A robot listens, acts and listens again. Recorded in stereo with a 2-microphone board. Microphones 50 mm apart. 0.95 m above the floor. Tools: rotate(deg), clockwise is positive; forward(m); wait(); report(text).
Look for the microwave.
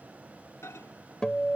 rotate(-90)
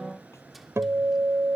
wait()
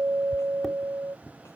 report("Facing the microwave.")